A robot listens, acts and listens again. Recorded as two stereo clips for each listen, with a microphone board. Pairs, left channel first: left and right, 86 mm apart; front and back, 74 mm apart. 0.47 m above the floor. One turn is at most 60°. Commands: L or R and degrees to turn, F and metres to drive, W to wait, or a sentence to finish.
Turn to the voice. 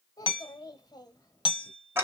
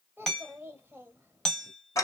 L60
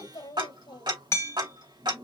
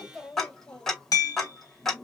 L60
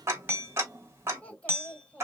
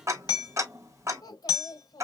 L15
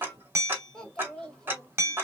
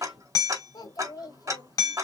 L10
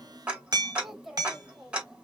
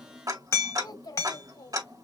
Found it: a child speaking, straight ahead.